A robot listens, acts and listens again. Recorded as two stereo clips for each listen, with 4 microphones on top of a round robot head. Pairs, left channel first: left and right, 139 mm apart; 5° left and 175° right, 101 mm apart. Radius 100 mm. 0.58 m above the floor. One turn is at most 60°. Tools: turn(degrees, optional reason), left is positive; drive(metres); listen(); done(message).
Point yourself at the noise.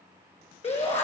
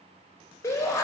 turn(degrees=60, reason="The shout: 60° left.")
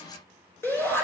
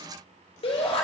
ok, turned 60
turn(degrees=20, reason="The shout is now 20° left.")
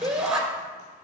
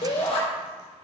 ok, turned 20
done("Found it: a shout, straight ahead.")